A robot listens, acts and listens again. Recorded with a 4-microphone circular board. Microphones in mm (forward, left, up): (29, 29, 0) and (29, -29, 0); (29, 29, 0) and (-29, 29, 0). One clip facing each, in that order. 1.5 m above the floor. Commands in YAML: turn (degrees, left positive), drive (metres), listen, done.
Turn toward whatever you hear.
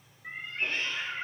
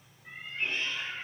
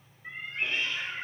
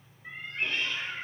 turn: 75
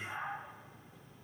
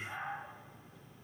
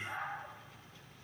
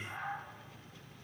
done: "Found it: a cat meowing, straight ahead."